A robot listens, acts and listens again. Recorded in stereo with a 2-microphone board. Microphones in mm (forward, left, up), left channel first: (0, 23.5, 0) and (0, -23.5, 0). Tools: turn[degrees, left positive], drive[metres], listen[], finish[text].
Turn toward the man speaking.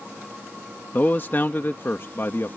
Thought: The man speaking: about 55° left or 125° left.
Action: turn[55]
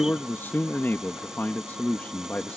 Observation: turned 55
Thought: So it is at 35° left.
Action: turn[35]
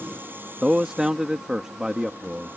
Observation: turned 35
Thought: The man speaking is now 15° right.
Action: turn[-15]
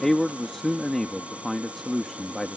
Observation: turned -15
Action: finish[Facing the man speaking.]